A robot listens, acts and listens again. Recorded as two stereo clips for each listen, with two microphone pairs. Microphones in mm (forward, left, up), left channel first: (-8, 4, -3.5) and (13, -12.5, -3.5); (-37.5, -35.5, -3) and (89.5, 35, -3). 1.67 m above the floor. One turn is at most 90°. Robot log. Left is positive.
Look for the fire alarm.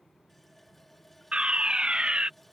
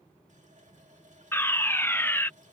note: The fire alarm: 80° right.
cmd yaw -80
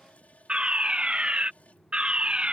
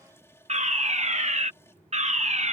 end: Facing the fire alarm.